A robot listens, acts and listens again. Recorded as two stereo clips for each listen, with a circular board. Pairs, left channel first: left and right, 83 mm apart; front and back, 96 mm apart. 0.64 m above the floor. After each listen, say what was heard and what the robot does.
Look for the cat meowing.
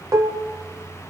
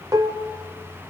Keep listening.
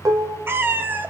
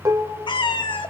The cat meowing: 25° right. Turn 25° right.
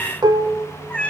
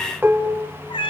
The cat meowing is now 15° left. Turn 15° left.
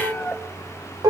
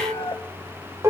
The cat meowing is now 10° left. Turn 10° left.
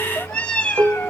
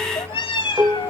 The cat meowing is now 20° left. Turn 20° left.
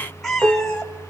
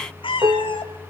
Found it: a cat meowing, straight ahead.